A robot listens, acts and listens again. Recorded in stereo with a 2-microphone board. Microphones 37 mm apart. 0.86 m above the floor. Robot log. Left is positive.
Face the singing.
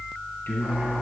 cmd yaw +90
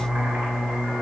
note: So it is at 15° right.
cmd yaw -15
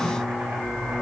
cmd idle
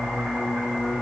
note: The singing is now 15° right.
cmd yaw -15
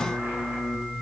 cmd idle
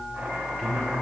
cmd idle
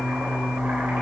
note: The singing is now 10° right.
cmd yaw -10
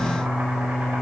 end: Found it: singing, straight ahead, over 4 m away.